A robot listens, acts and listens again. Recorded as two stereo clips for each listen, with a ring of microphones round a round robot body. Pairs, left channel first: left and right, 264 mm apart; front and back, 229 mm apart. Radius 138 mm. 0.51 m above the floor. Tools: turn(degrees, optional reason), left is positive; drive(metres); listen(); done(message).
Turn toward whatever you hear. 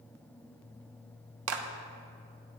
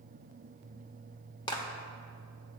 turn(degrees=-70, reason="The clap: 70° right.")
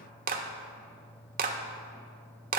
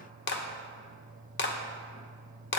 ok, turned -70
turn(degrees=-35, reason="The clap is now 35° right.")
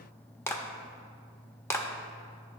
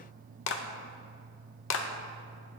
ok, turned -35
turn(degrees=10, reason="The clap is now 10° left.")
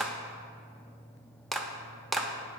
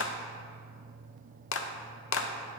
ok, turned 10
done("Found it: a clap, straight ahead.")